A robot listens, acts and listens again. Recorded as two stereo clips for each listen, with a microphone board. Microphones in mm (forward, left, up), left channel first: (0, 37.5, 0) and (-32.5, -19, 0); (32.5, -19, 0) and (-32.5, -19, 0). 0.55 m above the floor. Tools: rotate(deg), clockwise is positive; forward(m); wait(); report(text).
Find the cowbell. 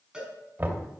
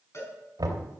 rotate(40)
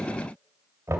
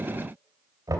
wait()
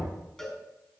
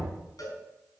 rotate(25)
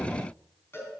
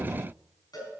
rotate(-10)
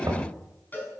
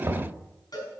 report("Found it: a cowbell, straight ahead.")